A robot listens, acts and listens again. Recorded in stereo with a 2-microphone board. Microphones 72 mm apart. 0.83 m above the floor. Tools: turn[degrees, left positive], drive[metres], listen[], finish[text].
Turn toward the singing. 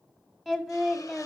Action: turn[30]
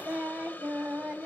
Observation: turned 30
Thought: So it is at 10° right.
Action: turn[-10]
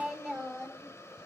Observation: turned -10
Action: finish[Found it: singing, straight ahead, 2 to 4 m away.]